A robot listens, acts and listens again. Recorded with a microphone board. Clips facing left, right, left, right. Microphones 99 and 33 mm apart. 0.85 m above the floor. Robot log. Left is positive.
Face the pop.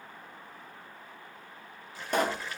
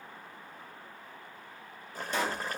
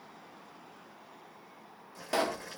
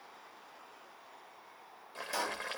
note: The pop: about 55° left or 125° left.
cmd yaw +55
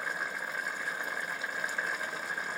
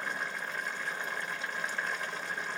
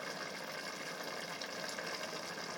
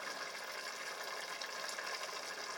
cmd idle
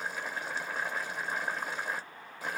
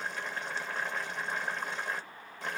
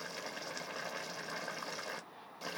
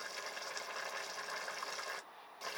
end: I heard a pop, but can't make it out now. It was about straight ahead or 70° left.